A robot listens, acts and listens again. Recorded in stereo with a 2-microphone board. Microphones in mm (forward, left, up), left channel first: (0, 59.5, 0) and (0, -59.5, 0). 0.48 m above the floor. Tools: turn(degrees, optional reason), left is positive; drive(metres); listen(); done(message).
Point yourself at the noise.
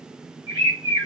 turn(degrees=-35, reason="The bird: about 35° right or 145° right.")
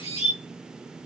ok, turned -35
turn(degrees=-105, reason="So it is at 105° right.")
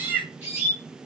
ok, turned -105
turn(degrees=-15, reason="The bird is now 15° right.")
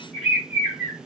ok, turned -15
done("Found it: a bird, straight ahead, 2 to 4 m away.")